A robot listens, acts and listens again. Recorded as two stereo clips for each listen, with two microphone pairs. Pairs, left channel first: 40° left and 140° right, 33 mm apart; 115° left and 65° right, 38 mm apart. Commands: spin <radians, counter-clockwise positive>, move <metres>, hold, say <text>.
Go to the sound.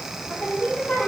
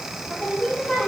spin 0.96
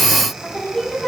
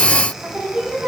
spin -0.17
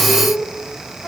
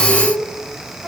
move 1.0
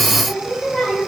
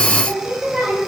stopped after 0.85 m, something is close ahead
say Something is in my way. I am facing the singing but have not reached it.